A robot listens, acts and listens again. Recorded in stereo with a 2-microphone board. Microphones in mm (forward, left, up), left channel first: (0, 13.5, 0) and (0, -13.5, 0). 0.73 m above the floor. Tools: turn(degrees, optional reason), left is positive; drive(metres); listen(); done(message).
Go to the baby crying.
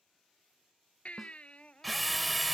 turn(degrees=45, reason="The baby crying: about 45° left or 135° left.")
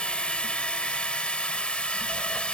listen()
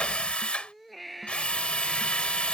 drive(metres=1.0)
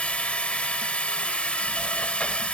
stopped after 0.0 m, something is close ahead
listen()
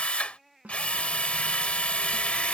done("Blocked. The baby crying is further on, straight ahead.")